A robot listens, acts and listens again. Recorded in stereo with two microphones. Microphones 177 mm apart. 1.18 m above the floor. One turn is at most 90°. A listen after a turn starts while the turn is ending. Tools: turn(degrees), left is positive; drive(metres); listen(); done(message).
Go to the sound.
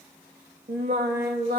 turn(degrees=-65)
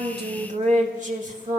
turn(degrees=-45)
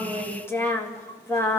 turn(degrees=15)
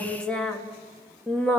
drive(metres=1.0)
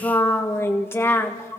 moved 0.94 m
turn(degrees=15)
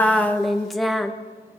drive(metres=1.0)
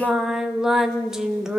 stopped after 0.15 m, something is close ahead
done("Arrived at the singing, straight ahead.")